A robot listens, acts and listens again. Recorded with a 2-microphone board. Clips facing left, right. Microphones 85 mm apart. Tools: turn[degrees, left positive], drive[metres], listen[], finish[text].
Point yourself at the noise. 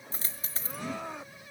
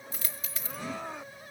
Thought: The dropped coin: about 35° left or 145° left.
Action: turn[35]
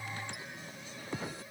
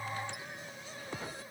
Action: listen[]
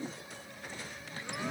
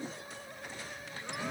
Action: finish[I heard a dropped coin, but can't make it out now. It was about straight ahead or 110° left.]